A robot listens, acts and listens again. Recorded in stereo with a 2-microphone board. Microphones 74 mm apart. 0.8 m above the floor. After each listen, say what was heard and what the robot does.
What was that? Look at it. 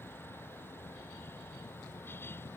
Keep listening.
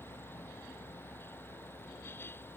Keep listening.
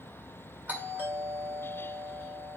The doorbell: about 25° right or 155° right. Turn 25° right.
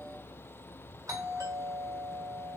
So it is at 130° right. Turn 130° right.
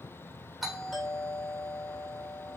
Found it: a doorbell, straight ahead.